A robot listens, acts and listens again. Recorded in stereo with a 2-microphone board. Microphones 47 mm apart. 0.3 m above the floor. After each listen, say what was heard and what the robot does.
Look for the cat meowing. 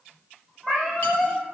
Turn 30° left.
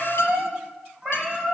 So it is at 20° right. Turn 20° right.
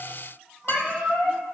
Facing the cat meowing, 2 to 4 m away.